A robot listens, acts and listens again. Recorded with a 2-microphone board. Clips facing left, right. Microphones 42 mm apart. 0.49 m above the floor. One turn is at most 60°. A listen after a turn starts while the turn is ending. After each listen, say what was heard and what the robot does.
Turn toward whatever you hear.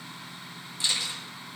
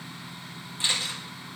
The camera shutter: about 35° right or 145° right. Turn 35° right.
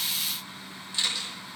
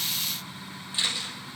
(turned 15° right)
So it is at 20° right. Turn 20° right.
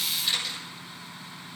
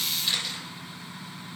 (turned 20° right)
Found it: a camera shutter, straight ahead, over 4 m away.